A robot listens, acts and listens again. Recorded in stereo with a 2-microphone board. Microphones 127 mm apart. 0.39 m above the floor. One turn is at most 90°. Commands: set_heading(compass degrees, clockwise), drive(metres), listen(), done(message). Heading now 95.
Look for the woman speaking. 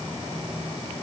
listen()
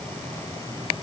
listen()
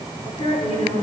set_heading(40)
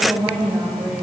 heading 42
done("Facing the woman speaking, over 4 m away.")